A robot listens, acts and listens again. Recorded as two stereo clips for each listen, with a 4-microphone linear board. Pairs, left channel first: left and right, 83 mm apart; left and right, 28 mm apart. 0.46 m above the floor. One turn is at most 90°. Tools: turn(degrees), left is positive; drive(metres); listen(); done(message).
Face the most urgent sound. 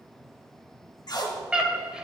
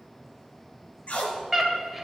turn(degrees=-30)
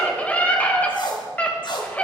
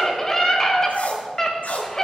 turn(degrees=20)
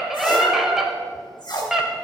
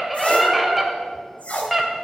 done("Facing the scream, 1 to 2 m away.")